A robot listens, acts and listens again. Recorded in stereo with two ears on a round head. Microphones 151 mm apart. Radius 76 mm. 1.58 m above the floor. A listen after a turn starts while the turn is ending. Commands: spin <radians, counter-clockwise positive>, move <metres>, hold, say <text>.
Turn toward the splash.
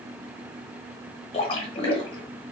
spin 0.61
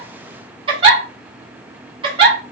hold
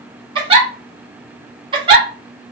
say I heard a splash, but can't make it out now. It was about straight ahead or 110° left.